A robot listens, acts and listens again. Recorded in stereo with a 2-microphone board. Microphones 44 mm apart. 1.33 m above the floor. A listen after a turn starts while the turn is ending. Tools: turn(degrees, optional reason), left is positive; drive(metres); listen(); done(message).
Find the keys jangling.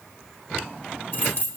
turn(degrees=50, reason="The keys jangling: about 50° left or 130° left.")
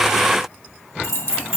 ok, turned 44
turn(degrees=85, reason="So it is at 85° left.")
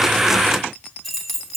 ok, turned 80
done("Found it: keys jangling, straight ahead.")